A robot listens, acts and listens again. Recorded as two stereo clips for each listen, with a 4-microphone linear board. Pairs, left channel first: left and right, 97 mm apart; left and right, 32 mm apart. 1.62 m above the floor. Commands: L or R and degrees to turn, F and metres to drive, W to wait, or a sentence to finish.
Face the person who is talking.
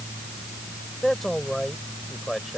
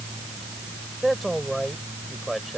L30
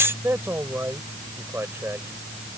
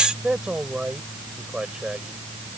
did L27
R25
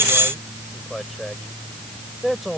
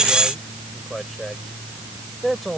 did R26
Facing the man speaking.